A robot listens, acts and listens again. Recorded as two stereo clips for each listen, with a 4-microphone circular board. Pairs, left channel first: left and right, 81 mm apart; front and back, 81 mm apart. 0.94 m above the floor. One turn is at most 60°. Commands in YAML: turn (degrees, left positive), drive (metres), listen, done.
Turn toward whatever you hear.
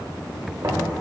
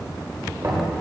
turn: -60
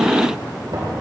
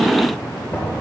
turn: -60
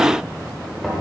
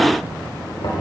done: "Facing the knocking."